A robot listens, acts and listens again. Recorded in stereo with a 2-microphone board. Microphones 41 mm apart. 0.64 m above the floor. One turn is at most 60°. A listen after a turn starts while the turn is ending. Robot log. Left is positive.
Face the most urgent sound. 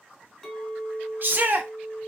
note: The shout: about 50° right or 130° right.
cmd yaw -50
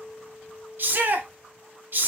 note: So it is at 65° right.
cmd yaw -60
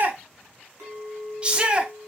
note: The shout is now 30° right.
cmd yaw -30
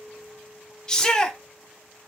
note: The shout is now 20° left.
cmd yaw +20
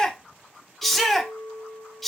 end: Facing the shout, under 1 m away.